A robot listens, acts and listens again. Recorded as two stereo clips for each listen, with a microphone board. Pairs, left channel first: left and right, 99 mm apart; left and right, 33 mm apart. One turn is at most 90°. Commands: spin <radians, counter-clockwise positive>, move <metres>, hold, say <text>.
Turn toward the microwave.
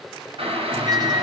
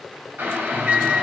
spin -0.79
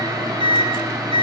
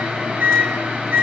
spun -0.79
spin -1.57
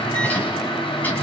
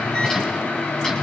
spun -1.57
spin 0.26
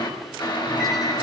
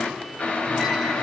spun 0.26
hold
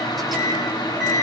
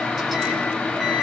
say Facing the microwave, over 4 m away.